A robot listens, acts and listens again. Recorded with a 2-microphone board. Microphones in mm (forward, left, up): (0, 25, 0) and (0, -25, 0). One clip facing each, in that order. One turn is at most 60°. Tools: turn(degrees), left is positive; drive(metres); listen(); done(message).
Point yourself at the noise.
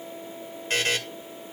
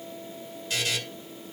turn(degrees=45)
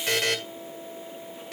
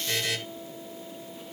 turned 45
turn(degrees=60)
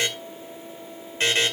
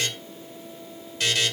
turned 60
turn(degrees=35)
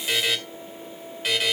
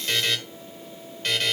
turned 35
done("Facing the buzzer.")